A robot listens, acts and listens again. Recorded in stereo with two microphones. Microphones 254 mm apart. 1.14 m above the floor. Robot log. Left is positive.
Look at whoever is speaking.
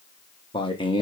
note: The man speaking: about 20° left or 160° left.
cmd yaw +20
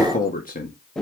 note: So it is at 140° left.
cmd yaw +140
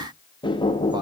cmd idle
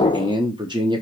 note: The man speaking is now 20° right.
cmd yaw -20
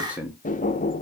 end: Found it: a man speaking, straight ahead.